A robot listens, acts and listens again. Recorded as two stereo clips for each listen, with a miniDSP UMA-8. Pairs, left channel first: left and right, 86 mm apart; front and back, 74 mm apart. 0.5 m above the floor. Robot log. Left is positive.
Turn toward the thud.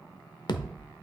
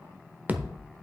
note: The thud: 115° left.
cmd yaw +115
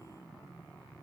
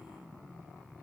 end: I heard a thud from this way, but can't make it out now.